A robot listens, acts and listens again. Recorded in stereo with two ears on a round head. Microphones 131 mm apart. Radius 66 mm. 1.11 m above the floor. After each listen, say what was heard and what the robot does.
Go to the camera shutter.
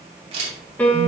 The camera shutter: about 45° right or 135° right. Turn 45° right.
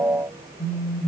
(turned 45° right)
Keep listening.
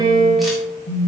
Keep listening.
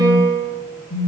I heard a camera shutter, but can't make it out now. It was about straight ahead or 90° right. I did not reach it.